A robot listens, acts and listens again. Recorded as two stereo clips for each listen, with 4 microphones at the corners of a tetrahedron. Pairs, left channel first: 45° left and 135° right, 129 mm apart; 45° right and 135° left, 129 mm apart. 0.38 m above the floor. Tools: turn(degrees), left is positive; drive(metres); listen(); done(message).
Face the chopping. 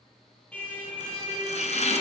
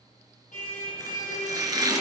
turn(degrees=75)
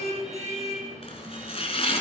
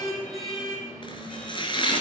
done("Facing the chopping.")